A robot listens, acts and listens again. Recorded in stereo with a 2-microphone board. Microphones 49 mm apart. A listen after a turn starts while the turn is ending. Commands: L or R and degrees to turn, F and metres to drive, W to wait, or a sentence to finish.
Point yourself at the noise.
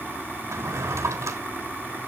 R75
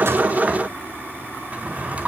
R30
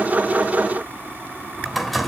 Facing the drawer, 2 to 4 m away.